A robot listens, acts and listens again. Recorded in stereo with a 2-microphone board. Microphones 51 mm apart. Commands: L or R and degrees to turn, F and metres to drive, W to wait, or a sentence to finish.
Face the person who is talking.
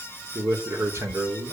R65
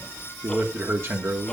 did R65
R45
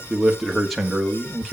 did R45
Facing the man speaking, 2 to 4 m away.